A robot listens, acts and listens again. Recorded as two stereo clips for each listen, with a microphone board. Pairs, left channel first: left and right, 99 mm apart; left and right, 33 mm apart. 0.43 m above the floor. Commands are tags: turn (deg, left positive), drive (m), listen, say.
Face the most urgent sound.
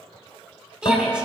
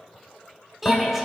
<turn deg="-30"/>
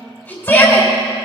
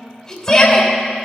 <turn deg="20"/>
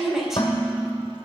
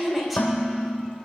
<say>Found it: a shout, straight ahead.</say>